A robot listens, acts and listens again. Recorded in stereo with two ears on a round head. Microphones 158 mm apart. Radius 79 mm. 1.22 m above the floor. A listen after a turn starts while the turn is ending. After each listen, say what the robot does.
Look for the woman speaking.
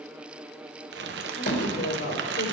Turn 65° left.
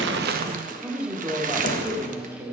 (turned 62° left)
Turn 20° right.
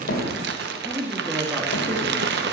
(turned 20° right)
Turn 15° right.
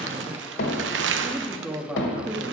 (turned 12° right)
Found it: a woman speaking, straight ahead, 1 to 2 m away.